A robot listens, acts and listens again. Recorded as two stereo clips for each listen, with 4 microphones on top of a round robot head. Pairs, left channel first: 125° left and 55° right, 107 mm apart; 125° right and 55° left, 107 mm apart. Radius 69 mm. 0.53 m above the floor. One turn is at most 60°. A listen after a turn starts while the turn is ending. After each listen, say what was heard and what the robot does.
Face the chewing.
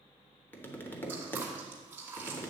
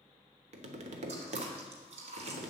The chewing: 20° left. Turn 20° left.
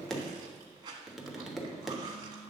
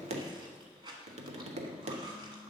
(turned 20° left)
Found it: chewing, straight ahead.